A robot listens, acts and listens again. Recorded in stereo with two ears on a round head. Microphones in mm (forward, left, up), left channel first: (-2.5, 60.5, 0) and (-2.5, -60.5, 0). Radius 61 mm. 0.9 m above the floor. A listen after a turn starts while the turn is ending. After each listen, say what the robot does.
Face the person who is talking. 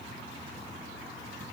Keep listening.
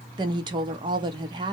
Turn 35° right.
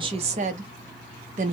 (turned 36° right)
Turn 105° right.
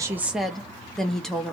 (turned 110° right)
Facing the woman speaking.